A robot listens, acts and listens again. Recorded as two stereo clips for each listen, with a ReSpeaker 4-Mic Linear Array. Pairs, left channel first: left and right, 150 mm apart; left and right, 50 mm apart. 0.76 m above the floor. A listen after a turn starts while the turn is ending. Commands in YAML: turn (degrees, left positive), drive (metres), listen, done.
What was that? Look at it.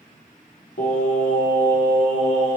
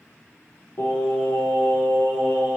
turn: 35
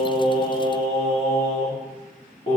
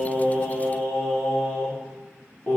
turn: 35
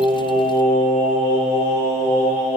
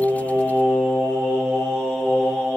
turn: 125
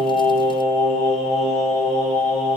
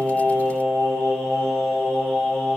done: "Found it: singing, straight ahead."